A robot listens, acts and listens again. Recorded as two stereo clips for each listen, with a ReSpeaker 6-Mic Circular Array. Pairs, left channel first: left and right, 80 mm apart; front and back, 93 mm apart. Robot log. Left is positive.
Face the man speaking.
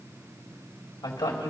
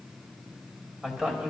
note: The man speaking: 105° left.
cmd yaw +105
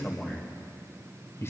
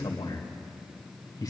note: The man speaking is now 40° left.
cmd yaw +40
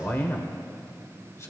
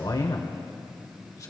note: The man speaking is now 45° left.
cmd yaw +45
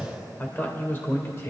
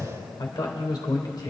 note: The man speaking is now 40° left.
cmd yaw +40
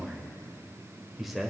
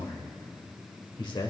end: Found it: a man speaking, straight ahead, 2 to 4 m away.